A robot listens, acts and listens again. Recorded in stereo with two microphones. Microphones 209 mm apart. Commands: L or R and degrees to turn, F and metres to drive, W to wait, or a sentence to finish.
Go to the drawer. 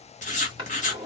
R25
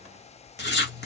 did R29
W
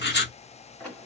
F1.0
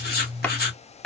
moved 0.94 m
F1.0
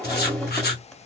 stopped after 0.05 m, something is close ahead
I am next to the drawer.